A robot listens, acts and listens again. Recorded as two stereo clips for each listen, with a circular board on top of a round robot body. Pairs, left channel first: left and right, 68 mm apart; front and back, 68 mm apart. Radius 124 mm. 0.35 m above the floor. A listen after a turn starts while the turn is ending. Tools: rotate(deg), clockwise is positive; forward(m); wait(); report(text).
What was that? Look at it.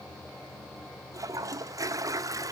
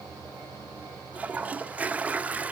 rotate(115)
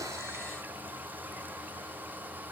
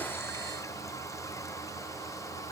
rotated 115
rotate(30)
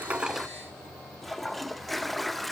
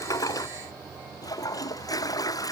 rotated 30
report("Found it: a toilet flushing, straight ahead, 1 to 2 m away.")